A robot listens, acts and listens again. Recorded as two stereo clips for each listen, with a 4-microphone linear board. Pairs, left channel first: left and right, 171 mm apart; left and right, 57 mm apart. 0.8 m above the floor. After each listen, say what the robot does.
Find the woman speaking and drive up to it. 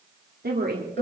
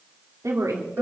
Turn 65° right.
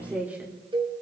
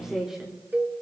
Turn 10° right.
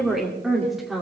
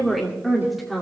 Drive 1.0 m forward.
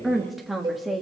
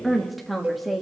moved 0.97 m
Drive 1.0 m forward.
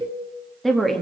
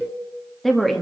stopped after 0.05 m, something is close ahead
Arrived at the woman speaking, straight ahead.